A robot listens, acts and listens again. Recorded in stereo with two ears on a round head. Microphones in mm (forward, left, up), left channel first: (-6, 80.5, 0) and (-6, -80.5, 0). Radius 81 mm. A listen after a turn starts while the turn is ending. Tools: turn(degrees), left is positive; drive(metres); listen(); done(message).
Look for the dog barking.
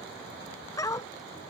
turn(degrees=20)
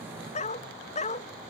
turn(degrees=140)
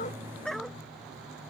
done("Facing the dog barking.")